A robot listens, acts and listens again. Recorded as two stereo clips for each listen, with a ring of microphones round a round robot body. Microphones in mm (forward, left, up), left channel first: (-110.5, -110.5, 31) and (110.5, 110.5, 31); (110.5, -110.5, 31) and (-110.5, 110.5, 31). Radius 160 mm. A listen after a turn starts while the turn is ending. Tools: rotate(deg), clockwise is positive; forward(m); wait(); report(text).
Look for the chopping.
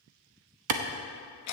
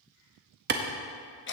wait()
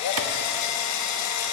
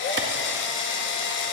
wait()
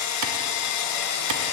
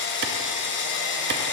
report("I can't make out chopping to turn to.")